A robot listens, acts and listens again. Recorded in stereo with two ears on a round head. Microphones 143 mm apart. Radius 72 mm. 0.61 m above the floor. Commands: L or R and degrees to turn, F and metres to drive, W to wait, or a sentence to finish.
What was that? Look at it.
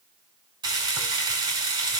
R30
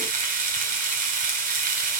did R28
R125
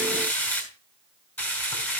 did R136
L15
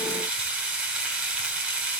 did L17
Found it: frying, straight ahead, over 4 m away.